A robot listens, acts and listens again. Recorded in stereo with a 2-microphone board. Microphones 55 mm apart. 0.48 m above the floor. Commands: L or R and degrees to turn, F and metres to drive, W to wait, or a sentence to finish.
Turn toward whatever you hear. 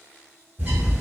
R35
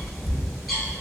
Found it: a bird, straight ahead, 1 to 2 m away.